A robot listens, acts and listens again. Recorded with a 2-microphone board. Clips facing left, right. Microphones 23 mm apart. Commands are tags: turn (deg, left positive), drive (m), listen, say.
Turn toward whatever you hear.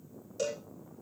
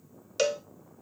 <turn deg="-70"/>
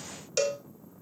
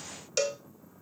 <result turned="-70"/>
<turn deg="-10"/>
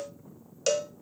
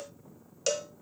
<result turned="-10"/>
<say>Facing the cowbell.</say>